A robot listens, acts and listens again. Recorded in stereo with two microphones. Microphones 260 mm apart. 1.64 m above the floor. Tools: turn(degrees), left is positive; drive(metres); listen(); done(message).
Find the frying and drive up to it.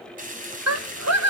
turn(degrees=-30)
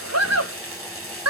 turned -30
turn(degrees=-120)
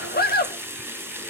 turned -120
turn(degrees=-10)
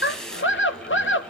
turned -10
drive(metres=1.0)
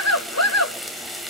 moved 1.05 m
drive(metres=1.0)
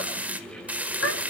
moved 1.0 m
drive(metres=1.0)
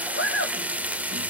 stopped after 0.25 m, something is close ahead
turn(degrees=-10)
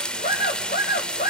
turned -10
done("I am next to the frying.")